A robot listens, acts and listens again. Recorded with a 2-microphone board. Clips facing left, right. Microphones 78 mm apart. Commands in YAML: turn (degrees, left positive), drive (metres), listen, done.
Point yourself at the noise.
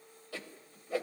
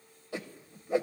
turn: -20
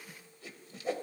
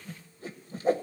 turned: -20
turn: -135
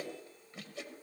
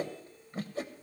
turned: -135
turn: -40
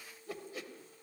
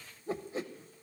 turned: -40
turn: -35
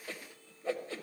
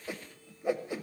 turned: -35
turn: -15
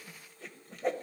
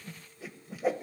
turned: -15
done: "Facing the whoosh."